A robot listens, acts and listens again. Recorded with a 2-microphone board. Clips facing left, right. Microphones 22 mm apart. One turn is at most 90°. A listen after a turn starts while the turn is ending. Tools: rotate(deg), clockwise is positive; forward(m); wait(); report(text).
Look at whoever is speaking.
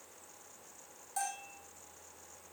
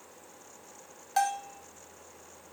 wait()
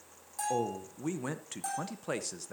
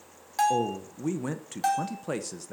rotate(-30)
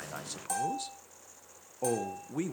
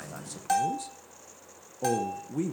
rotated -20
rotate(-90)
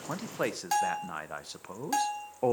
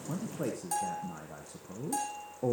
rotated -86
rotate(-70)
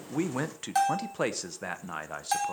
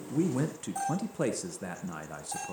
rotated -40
rotate(-30)
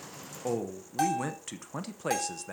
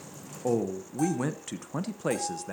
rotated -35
report("Found it: a man speaking, straight ahead, under 1 m away.")